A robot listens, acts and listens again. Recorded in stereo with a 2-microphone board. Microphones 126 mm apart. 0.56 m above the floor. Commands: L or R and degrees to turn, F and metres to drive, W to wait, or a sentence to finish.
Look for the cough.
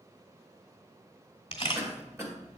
R20
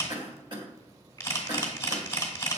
R135
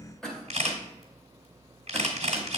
Facing the cough, 1 to 2 m away.